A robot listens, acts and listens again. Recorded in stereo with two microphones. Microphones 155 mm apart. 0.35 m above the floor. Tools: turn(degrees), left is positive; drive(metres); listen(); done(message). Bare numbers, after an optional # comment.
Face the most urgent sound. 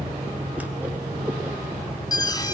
# The alarm: about 25° left or 155° left.
turn(25)
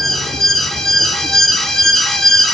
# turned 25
done("Found it: an alarm, straight ahead, 2 to 4 m away.")